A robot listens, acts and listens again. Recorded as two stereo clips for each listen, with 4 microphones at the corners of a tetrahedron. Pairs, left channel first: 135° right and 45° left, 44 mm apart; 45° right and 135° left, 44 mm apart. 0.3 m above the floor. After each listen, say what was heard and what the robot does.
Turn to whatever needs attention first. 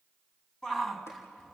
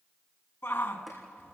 The shout: 55° right. Turn 55° right.
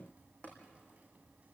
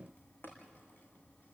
Keep listening.
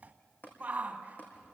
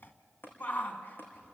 Facing the shout, 2 to 4 m away.